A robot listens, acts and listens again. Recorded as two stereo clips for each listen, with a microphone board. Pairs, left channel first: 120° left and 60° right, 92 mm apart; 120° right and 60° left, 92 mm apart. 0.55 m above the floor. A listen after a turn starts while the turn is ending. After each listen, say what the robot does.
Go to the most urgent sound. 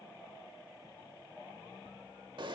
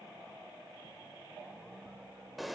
Keep listening.
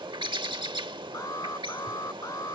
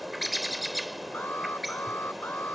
Turn 170° left.
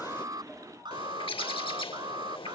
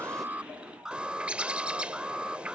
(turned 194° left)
Turn 20° right.
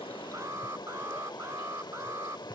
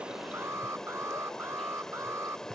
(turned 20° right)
Drive 1.0 m forward.
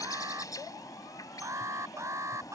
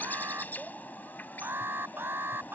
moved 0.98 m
Drive 1.0 m forward.
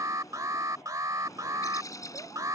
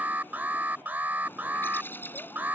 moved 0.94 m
Turn 10° right.
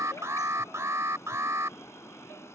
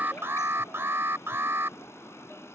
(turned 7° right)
Drive 1.0 m forward.
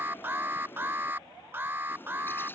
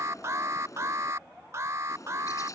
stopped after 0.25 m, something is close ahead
Arrived at the alarm, straight ahead.